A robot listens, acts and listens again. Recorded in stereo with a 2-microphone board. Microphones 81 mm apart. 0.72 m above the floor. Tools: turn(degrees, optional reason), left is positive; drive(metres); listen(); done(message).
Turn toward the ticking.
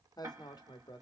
turn(degrees=-40, reason="The ticking: about 40° right or 140° right.")
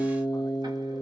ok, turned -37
listen()
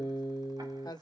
listen()
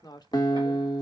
done("I heard ticking, but can't make it out now. It was about 5° right or 105° right.")